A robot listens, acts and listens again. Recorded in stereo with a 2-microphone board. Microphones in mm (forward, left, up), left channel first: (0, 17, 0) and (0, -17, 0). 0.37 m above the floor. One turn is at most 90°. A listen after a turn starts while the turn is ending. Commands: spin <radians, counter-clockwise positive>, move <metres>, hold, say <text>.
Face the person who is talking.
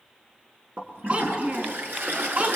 spin -0.79
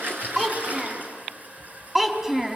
spin -0.17
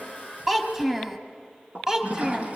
spin -0.26
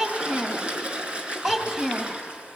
say Found it: a child speaking, straight ahead.